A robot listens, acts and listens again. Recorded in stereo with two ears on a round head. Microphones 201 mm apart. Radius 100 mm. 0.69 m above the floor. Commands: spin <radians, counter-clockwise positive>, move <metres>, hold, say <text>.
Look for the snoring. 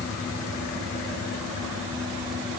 hold
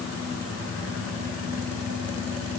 hold
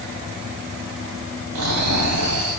spin -1.57
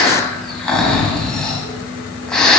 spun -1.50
say Found it: snoring, straight ahead, 1 to 2 m away.